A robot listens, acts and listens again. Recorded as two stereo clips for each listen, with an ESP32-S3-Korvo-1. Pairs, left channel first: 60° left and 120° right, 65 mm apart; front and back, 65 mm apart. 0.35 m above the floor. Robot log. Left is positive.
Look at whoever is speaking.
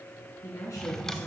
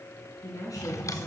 note: The woman speaking: 35° left.
cmd yaw +35
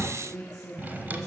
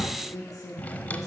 note: The woman speaking is now 10° right.
cmd yaw -10
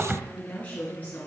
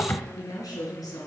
end: Found it: a woman speaking, straight ahead, over 4 m away.